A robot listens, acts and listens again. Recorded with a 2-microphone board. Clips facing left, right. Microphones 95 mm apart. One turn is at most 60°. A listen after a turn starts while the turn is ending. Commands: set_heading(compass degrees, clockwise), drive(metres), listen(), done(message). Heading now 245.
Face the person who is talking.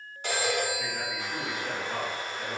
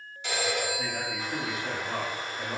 set_heading(290)
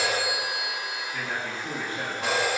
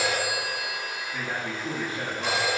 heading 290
done("Found it: a man speaking, straight ahead.")